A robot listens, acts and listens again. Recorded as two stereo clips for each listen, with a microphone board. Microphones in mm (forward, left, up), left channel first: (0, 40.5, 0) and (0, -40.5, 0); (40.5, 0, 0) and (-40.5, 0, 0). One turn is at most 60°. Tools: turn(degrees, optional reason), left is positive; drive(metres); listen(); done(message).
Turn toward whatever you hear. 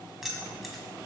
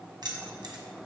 turn(degrees=60, reason="The keys jangling: straight behind.")
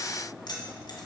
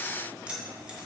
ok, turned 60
turn(degrees=60, reason="The keys jangling is now 100° left.")
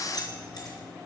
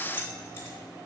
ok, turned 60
turn(degrees=55, reason="The keys jangling is now 55° left.")
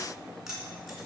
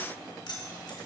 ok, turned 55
turn(degrees=-10, reason="The keys jangling is now 10° right.")
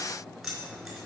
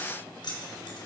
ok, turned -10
done("Found it: keys jangling, straight ahead, 2 to 4 m away.")